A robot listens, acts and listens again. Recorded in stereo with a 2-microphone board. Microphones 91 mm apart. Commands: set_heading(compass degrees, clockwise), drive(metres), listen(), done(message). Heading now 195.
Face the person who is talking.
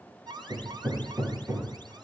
listen()
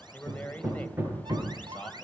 set_heading(180)
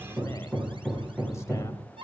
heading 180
listen()
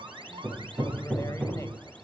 listen()
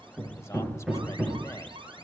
done("I heard a man speaking, but can't make it out now. It was about straight ahead or 150° left.")